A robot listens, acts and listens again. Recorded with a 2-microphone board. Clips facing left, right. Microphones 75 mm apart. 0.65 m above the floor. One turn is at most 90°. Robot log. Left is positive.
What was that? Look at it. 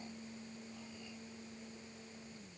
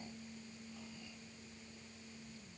cmd idle
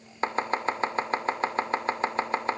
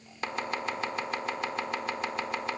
note: The chopping: about 35° left or 145° left.
cmd yaw +35
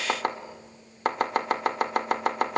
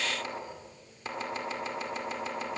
note: So it is at 105° left.
cmd yaw +90
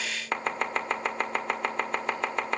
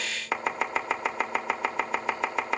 end: Facing the chopping.